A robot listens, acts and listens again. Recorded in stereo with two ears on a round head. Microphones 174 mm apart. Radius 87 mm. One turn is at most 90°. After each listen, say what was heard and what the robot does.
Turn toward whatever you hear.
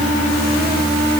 Keep listening.
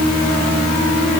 Keep listening.
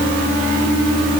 I can't make out anything to turn to.